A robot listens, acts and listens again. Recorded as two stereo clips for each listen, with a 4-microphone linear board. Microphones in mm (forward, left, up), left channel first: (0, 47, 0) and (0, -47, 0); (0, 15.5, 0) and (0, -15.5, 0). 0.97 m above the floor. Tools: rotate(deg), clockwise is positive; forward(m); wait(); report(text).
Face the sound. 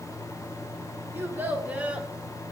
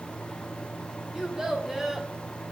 rotate(30)
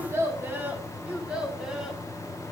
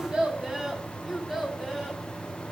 rotate(30)
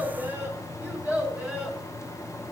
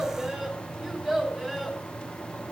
rotate(30)
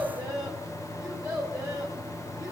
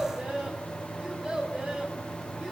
rotate(140)
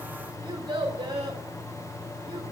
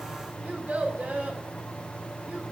rotate(50)
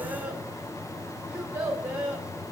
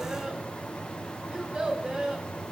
rotate(20)
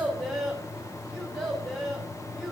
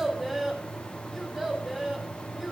report("Found it: a child speaking, straight ahead.")